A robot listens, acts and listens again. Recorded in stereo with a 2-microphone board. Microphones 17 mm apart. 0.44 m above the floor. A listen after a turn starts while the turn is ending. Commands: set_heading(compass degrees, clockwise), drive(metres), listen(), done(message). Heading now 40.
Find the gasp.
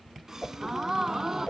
set_heading(75)
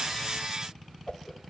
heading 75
listen()
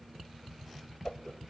done("I heard a gasp, but can't make it out now. It was about straight ahead or 110° right.")